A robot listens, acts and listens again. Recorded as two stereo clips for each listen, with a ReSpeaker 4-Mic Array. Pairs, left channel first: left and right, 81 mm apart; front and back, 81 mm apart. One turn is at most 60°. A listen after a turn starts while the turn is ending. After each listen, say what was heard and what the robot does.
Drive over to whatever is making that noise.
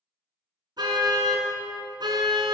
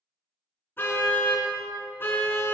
The car horn: 65° right. Turn 60° right.
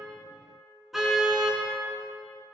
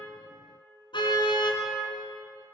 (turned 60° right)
Drive 1.0 m forward.
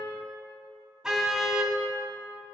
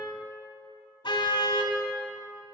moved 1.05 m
The car horn is now 10° right. Turn 10° right.
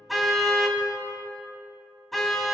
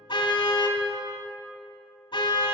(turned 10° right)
Drive 1.0 m forward.
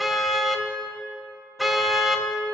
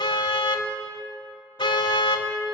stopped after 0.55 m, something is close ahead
Arrived at the car horn, straight ahead.